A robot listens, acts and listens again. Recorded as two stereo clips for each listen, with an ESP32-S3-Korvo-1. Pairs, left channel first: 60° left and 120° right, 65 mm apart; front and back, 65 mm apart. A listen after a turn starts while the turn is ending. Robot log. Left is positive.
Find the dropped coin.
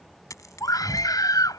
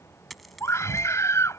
note: The dropped coin: 90° left.
cmd yaw +90
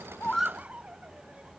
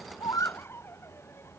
end: I heard a dropped coin from this way, but can't make it out now.